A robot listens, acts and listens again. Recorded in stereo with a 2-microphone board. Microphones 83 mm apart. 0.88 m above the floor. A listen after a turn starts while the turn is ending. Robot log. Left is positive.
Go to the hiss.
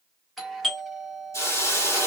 note: The hiss: about 35° left or 145° left.
cmd yaw +35
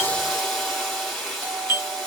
cmd fwd 1.0
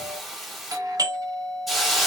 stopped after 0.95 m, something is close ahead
end: Arrived at the hiss, straight ahead.